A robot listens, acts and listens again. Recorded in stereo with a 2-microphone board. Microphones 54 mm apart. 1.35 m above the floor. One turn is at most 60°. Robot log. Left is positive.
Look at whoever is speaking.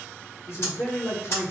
note: The man speaking: about 70° left or 110° left.
cmd yaw +60
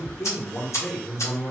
note: So it is at 10° left.
cmd yaw +10
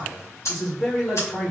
end: Found it: a man speaking, straight ahead.